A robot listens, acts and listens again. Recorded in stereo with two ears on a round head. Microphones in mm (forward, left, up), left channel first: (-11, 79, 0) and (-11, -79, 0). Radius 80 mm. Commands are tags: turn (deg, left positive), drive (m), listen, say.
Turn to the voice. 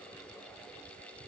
<listen/>
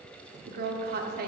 <turn deg="-55"/>
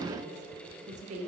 <turn deg="-50"/>
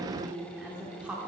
<turn deg="-10"/>
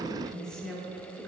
<say>Found it: a woman speaking, straight ahead, 1 to 2 m away.</say>